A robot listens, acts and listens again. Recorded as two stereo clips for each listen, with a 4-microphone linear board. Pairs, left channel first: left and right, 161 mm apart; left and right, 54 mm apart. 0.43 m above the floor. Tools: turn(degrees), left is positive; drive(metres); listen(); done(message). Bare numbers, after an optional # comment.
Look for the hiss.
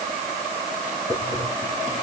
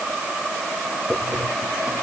# The hiss: about 55° left or 125° left.
turn(55)
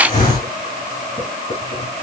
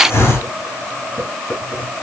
# So it is at 70° left.
turn(70)
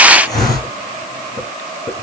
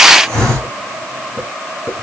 # The hiss is now 25° left.
turn(25)
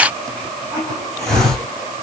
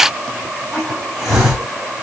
done("Found it: a hiss, straight ahead, 2 to 4 m away.")